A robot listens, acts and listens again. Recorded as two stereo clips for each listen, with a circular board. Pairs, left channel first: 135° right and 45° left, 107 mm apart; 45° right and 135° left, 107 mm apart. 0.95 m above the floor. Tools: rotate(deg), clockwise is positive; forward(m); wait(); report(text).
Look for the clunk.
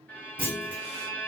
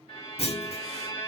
rotate(25)
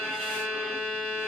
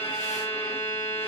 report("Facing where the clunk came from. I can't hear it now.")